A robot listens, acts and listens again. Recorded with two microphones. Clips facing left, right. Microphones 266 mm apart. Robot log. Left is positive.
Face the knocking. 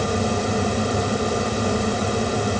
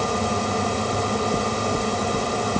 note: The knocking: about 65° right or 115° right.
cmd yaw -65
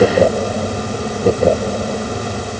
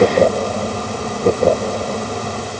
note: So it is at 10° right.
cmd yaw -10
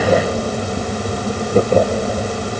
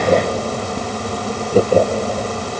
cmd idle
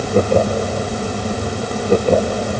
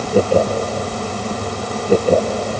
end: Found it: knocking, straight ahead.